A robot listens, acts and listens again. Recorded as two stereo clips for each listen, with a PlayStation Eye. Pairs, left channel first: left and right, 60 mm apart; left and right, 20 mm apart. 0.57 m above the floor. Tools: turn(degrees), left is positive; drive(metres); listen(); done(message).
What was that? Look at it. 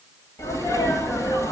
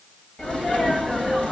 turn(degrees=65)
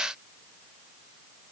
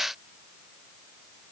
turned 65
listen()
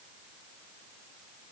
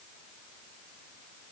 done("I heard a sneeze, but can't make it out now. It was about straight ahead or 50° left.")